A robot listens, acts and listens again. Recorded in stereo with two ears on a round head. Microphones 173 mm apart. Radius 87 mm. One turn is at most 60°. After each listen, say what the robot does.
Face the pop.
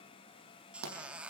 Turn 60° right.
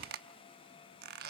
Turn 30° right.
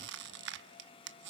Facing where the pop came from. I can't hear it now.